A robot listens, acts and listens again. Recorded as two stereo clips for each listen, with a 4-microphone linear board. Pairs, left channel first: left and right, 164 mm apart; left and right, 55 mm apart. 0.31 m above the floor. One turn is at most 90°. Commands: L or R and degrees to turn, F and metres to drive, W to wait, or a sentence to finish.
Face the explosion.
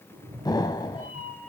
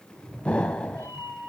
L25
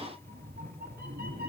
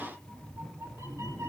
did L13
W
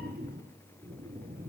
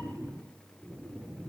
I heard an explosion, but can't make it out now. It was about 10° left or 145° left.